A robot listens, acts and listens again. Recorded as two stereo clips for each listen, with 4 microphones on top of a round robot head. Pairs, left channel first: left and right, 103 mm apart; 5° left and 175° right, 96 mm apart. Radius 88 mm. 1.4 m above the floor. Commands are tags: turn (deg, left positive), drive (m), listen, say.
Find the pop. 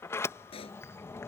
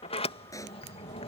<turn deg="60"/>
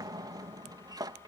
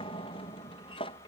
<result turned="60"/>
<say>Facing where the pop came from. I can't hear it now.</say>